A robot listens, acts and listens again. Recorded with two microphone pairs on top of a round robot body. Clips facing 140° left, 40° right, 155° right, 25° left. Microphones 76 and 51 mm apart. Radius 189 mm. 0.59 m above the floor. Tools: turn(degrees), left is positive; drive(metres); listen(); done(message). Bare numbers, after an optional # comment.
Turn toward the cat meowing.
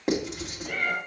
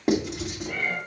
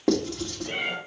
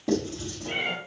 # The cat meowing: 100° left.
turn(100)
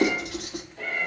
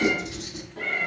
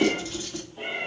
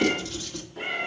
# The cat meowing is now 10° right.
turn(-10)
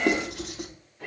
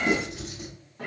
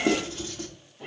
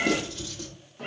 done("Found it: a cat meowing, straight ahead, 2 to 4 m away.")